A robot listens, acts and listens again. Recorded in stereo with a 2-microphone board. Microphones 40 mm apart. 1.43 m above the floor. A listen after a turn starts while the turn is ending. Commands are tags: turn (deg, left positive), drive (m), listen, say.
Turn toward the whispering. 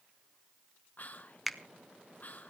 <turn deg="45"/>
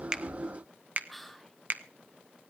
<say>Facing the whispering.</say>